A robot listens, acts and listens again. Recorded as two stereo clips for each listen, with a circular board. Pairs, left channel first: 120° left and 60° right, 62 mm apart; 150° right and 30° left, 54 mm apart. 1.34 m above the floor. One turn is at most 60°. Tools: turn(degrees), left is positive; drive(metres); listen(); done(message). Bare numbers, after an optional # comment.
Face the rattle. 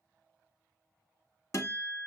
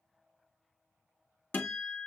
listen()
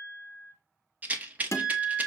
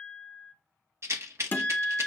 done("Found it: a rattle, straight ahead.")